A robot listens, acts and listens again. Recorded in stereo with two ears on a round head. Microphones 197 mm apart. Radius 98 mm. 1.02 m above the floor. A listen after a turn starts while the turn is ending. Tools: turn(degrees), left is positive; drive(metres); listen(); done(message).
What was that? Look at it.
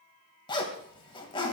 turn(degrees=20)
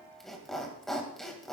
done("Facing the zipper.")